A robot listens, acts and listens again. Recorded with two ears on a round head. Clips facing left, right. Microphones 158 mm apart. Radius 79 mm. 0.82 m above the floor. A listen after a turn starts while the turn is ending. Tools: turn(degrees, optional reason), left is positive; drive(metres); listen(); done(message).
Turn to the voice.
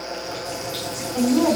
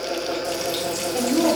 turn(degrees=-35, reason="The woman speaking: about 35° right or 145° right.")
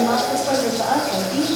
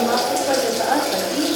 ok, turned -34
turn(degrees=-15, reason="So it is at 15° right.")
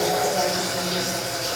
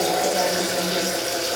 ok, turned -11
listen()
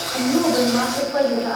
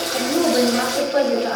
turn(degrees=-35, reason="The woman speaking is now 35° right.")
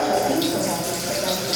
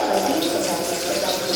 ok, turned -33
listen()
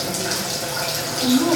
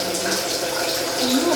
turn(degrees=-10, reason="The woman speaking is now 10° right.")
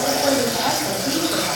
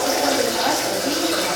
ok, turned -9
listen()
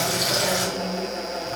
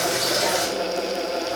listen()
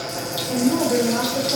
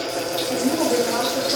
done("Facing the woman speaking, 2 to 4 m away.")